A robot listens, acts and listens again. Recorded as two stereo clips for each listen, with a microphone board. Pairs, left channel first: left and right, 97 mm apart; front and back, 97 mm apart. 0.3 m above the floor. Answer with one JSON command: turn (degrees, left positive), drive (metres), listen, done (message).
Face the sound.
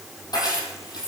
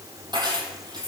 {"turn": 135}
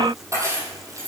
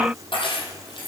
{"turn": -30}
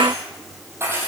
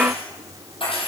{"turn": -25}
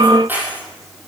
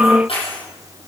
{"turn": -20}
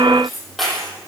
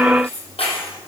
{"done": "Facing the keys jangling."}